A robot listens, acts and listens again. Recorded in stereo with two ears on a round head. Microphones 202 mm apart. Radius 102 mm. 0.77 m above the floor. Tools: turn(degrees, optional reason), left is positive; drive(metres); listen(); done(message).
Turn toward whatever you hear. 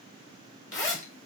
turn(degrees=30)
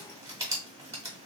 turn(degrees=-15, reason="So it is at 15° right.")
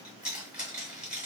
done("Facing the zipper, under 1 m away.")